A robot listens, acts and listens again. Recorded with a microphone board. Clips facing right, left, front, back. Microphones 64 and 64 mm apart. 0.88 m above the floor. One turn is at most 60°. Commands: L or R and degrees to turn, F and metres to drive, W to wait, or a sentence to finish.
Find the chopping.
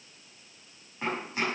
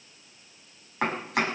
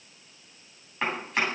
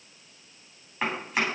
L60
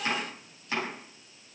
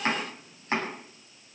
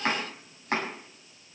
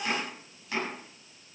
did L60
L40
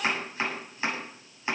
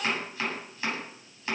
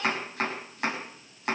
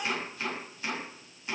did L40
R20
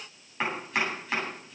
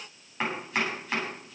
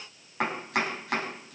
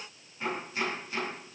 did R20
Found it: chopping, straight ahead, over 4 m away.